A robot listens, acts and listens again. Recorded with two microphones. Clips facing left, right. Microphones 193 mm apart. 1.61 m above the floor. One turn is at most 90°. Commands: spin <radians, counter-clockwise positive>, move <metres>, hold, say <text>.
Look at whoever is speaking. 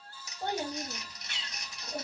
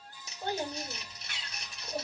spin 1.05
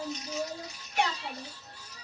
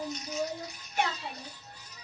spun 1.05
spin 0.52
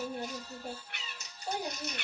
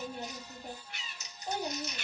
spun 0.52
say Found it: a child speaking, straight ahead.